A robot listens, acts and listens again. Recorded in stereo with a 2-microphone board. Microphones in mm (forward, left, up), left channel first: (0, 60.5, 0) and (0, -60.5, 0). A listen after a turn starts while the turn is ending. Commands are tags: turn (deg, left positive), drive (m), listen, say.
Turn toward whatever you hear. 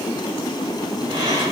<turn deg="-40"/>
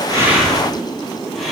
<say>Found it: breathing, straight ahead.</say>